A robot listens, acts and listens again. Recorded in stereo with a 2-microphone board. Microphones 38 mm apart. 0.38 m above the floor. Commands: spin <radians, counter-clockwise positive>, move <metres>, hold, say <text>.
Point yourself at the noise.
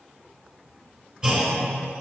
spin -0.44
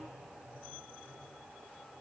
hold
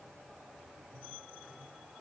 say I heard a clunk, but can't make it out now. It was about straight ahead or 130° right.